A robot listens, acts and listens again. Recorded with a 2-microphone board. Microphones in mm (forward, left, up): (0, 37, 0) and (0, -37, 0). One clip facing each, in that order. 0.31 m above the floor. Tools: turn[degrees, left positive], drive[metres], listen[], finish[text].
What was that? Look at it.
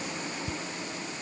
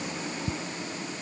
Thought: The ticking: about 75° right or 105° right.
Action: turn[-75]
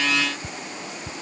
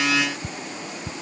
Action: finish[Facing the ticking.]